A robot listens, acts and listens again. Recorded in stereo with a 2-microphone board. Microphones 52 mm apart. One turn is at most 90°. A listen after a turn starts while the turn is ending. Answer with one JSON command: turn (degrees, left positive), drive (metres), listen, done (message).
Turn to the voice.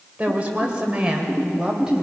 {"turn": -30}
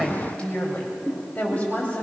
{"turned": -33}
{"turn": 30}
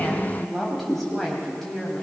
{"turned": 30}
{"turn": 10}
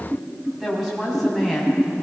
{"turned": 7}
{"done": "Found it: a woman speaking, straight ahead, over 4 m away."}